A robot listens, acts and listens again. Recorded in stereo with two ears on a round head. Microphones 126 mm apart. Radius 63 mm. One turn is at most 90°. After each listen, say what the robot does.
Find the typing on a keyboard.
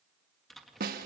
Turn 30° left.
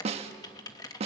Turn 90° left.
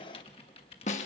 Turn 40° left.
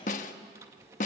Turn 20° right.
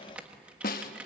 Turn 10° right.
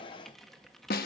Facing the typing on a keyboard.